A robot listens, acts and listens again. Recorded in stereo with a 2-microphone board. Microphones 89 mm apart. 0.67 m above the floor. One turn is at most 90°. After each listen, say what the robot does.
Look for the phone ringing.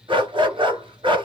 Keep listening.
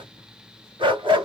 Keep listening.
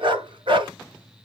I can't make out a phone ringing, only a dog barking.